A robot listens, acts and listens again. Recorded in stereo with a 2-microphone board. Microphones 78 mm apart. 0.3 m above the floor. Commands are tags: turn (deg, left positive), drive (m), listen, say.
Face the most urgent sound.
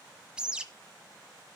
<listen/>
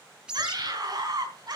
<turn deg="-60"/>
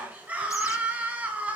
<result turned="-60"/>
<turn deg="-20"/>
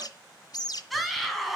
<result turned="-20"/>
<say>Facing the scream.</say>